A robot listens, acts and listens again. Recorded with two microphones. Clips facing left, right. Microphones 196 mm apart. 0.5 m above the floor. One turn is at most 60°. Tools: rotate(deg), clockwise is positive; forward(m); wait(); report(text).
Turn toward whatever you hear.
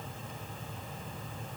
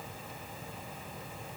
wait()
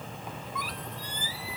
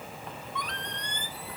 rotate(-30)
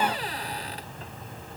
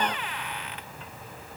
rotate(-60)
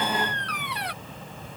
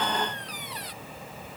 rotate(-60)
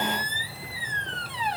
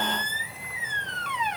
rotate(-35)
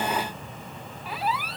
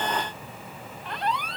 report("Facing the squeak.")